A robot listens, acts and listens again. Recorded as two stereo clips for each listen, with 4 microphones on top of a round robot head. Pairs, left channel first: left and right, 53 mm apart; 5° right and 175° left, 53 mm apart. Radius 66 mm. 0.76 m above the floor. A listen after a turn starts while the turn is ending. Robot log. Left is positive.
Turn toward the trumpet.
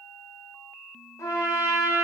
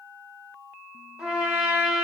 note: The trumpet: 95° left.
cmd yaw +95
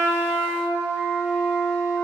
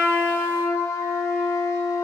end: Found it: a trumpet, straight ahead.